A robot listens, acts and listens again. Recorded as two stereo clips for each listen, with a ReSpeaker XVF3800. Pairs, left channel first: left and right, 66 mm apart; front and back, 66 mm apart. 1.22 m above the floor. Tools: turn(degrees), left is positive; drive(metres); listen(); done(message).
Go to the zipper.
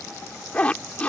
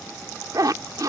turn(degrees=160)
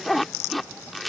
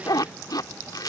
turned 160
drive(metres=1.0)
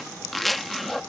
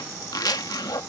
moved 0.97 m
drive(metres=1.0)
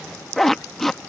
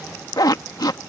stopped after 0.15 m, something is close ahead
done("I am next to the zipper.")